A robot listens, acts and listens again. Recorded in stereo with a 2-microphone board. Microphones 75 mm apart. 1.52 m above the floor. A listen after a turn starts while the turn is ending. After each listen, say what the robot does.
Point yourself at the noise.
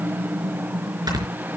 Turn 65° right.
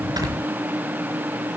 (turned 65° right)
Keep listening.
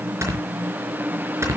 Turn 40° right.
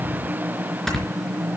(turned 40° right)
Facing the snoring.